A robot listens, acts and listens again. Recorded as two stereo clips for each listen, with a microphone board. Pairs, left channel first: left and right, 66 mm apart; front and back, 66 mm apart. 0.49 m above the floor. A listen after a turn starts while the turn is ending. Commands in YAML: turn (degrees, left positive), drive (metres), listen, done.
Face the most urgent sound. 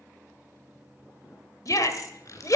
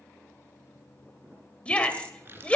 turn: 70
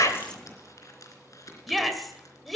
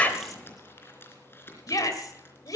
done: "Facing the shout."